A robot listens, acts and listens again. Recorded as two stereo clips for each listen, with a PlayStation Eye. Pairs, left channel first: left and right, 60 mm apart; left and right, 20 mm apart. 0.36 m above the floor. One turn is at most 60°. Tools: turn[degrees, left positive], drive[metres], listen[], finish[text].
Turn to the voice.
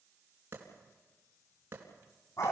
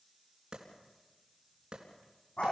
Action: listen[]
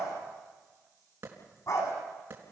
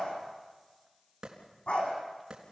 Action: listen[]
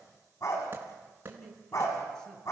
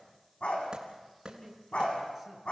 Action: turn[30]
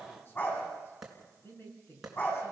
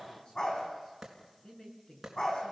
Thought: So it is at 145° left.
Action: turn[60]
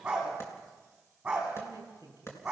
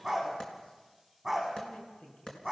Thought: The man speaking is now 95° left.
Action: turn[60]
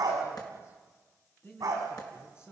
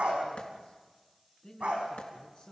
Thought: The man speaking is now 45° left.
Action: turn[45]
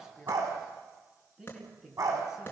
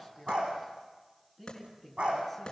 Thought: The man speaking is now 10° right.
Action: turn[-10]
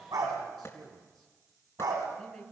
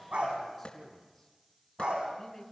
Action: finish[Facing the man speaking.]